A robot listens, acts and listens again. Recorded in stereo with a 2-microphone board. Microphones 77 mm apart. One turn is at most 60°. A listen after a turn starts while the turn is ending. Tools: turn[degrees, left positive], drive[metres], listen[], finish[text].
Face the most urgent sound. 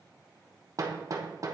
Action: listen[]
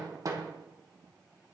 Action: listen[]
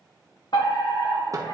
Action: turn[60]
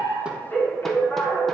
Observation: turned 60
Thought: So it is at 30° left.
Action: turn[30]
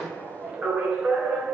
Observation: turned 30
Action: finish[Found it: a fire alarm, straight ahead.]